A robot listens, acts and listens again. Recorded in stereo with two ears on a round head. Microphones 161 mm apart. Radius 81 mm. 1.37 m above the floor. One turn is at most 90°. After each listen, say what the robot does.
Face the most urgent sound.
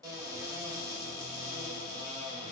Keep listening.
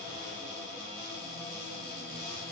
Keep listening.
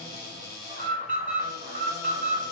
Turn 50° right.
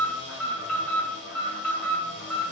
Facing the alarm.